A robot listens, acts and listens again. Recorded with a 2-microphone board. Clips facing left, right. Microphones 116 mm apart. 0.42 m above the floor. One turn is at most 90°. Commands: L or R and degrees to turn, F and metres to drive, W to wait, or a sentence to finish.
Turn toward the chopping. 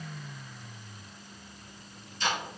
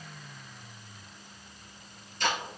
W
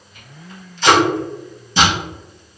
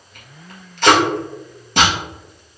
W
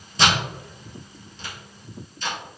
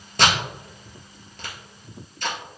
I can't make out chopping to turn to.